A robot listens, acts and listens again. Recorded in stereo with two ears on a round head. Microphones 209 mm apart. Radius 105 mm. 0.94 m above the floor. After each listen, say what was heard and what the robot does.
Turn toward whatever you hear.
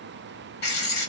The writing: about 45° left or 135° left. Turn 45° left.
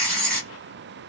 Facing the writing.